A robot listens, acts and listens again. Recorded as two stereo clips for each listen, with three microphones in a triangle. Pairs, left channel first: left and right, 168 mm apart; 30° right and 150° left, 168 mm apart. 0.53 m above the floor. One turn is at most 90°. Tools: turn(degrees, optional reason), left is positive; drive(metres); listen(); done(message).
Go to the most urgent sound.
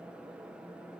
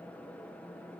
listen()
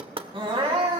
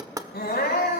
turn(degrees=-30, reason="The crying: 30° right.")
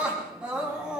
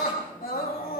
drive(metres=1.0)
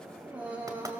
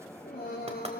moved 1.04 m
turn(degrees=-10, reason="The crying is now 10° right.")
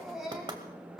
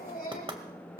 drive(metres=1.0)
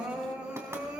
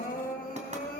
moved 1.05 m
drive(metres=1.0)
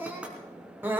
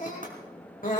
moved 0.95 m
turn(degrees=-15, reason="The crying is now 15° right.")
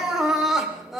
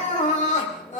drive(metres=1.0)
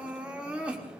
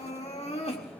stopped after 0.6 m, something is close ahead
turn(degrees=-10, reason="The crying is now 10° right.")
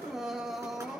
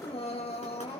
done("Arrived at the crying, straight ahead.")